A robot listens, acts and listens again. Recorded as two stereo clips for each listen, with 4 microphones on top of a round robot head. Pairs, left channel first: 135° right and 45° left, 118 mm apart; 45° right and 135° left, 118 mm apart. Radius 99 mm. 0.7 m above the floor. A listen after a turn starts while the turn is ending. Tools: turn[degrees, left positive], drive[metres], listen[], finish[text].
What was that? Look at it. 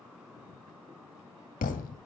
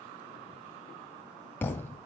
Thought: The thud: 120° right.
Action: turn[-120]
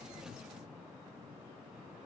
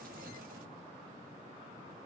Action: finish[Facing where the thud came from. I can't hear it now.]